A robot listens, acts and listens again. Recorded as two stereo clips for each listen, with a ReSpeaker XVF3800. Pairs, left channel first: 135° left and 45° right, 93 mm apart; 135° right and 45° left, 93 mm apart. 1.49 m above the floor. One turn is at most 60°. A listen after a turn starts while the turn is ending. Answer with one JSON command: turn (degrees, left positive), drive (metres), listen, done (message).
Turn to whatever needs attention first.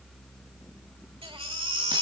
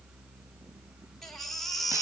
{"turn": -50}
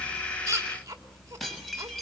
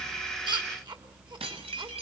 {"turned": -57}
{"turn": 10}
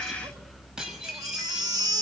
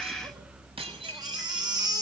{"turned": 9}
{"done": "Found it: a baby crying, straight ahead."}